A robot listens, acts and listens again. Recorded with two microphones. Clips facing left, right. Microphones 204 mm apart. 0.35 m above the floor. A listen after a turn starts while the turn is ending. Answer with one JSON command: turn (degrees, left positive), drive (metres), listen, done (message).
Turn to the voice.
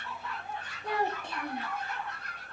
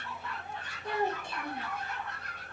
{"turn": 65}
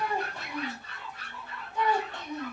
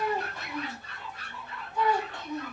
{"turn": 20}
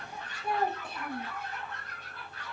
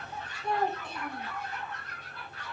{"turn": 10}
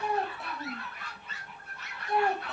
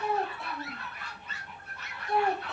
{"done": "Facing the child speaking."}